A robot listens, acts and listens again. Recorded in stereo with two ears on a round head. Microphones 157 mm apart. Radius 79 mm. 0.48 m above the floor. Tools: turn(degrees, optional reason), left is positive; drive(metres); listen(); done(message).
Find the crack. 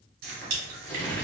turn(degrees=-45, reason="The crack: about 45° right or 135° right.")
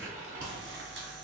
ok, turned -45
listen()
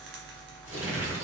done("I heard a crack, but can't make it out now. It was about straight ahead or 90° right.")